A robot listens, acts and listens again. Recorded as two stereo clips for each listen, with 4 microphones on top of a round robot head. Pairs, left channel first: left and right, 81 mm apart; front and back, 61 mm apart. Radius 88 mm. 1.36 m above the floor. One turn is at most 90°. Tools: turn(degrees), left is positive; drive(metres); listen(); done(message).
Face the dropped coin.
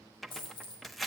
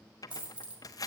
turn(degrees=90)
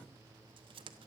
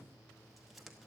turn(degrees=25)
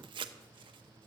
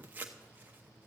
done("Facing where the dropped coin came from. I can't hear it now.")